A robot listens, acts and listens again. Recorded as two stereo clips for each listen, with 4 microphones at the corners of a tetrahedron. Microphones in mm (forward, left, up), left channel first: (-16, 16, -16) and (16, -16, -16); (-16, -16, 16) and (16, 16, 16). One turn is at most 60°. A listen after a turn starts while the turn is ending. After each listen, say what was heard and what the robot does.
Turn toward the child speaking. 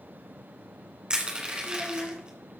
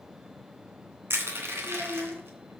The child speaking: 125° left. Turn 60° left.
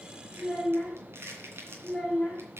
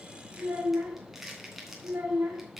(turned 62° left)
The child speaking is now 70° left. Turn 60° left.
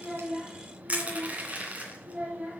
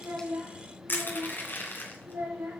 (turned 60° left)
The child speaking is now 20° left. Turn 20° left.
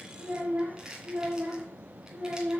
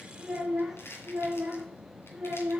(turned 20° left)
Facing the child speaking.